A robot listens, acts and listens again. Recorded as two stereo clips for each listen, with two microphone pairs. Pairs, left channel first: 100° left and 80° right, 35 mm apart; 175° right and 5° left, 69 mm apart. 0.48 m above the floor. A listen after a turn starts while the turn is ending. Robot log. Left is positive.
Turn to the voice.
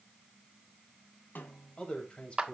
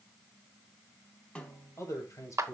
note: The man speaking: 150° left.
cmd yaw +150
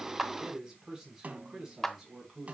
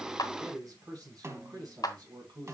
note: The man speaking is now 10° right.
cmd yaw -10
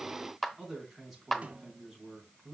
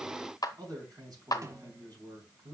end: Found it: a man speaking, straight ahead, over 4 m away.